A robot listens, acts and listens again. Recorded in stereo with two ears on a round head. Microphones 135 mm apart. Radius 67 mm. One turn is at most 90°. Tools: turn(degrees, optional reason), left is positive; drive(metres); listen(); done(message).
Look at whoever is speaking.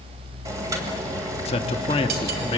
turn(degrees=35, reason="The man speaking: about 35° left or 145° left.")
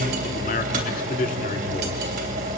turn(degrees=90, reason="So it is at 125° left.")
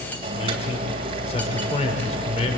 turn(degrees=45, reason="The man speaking is now 45° left.")
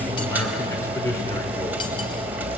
turn(degrees=20, reason="The man speaking is now 20° left.")
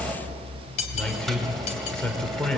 done("Facing the man speaking.")